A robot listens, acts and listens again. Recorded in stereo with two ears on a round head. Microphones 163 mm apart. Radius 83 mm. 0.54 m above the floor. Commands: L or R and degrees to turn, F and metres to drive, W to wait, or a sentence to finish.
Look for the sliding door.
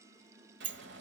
R65
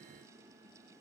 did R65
W
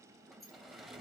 Facing the sliding door.